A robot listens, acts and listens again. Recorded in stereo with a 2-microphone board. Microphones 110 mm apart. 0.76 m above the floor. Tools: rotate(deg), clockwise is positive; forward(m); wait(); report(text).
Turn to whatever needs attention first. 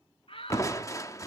rotate(-60)
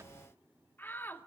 rotate(-20)
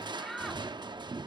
report("Found it: a shout, straight ahead.")